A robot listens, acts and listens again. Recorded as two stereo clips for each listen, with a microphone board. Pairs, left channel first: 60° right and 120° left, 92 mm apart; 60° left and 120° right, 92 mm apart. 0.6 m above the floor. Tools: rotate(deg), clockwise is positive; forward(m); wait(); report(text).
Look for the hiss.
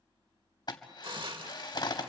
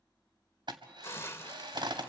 rotate(-120)
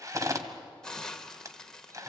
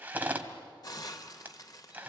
rotate(-25)
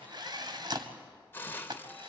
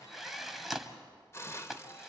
report("Found it: a hiss, straight ahead, 1 to 2 m away.")